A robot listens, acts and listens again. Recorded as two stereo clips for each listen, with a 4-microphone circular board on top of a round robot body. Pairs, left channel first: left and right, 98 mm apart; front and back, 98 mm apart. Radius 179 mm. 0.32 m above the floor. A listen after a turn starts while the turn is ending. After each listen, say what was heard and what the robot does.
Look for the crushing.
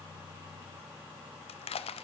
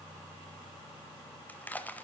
The crushing: 75° left. Turn 75° left.
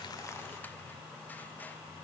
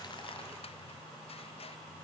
Keep listening.
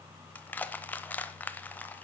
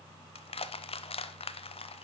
The crushing is now 15° left. Turn 15° left.
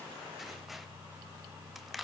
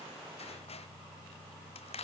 Found it: crushing, straight ahead, under 1 m away.